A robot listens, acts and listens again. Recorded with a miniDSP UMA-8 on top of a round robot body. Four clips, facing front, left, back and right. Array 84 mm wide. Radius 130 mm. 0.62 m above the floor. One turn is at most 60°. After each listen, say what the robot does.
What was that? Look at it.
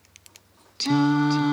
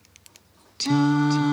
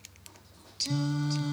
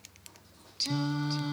Turn 40° left.
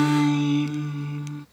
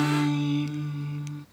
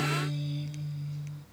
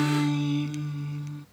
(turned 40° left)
Found it: singing, straight ahead.